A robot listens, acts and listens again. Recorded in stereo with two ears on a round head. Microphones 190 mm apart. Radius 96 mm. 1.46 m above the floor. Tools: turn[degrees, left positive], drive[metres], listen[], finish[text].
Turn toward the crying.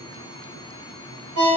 Action: listen[]
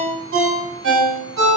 Action: listen[]
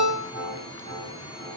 Action: finish[I can't make out crying to turn to.]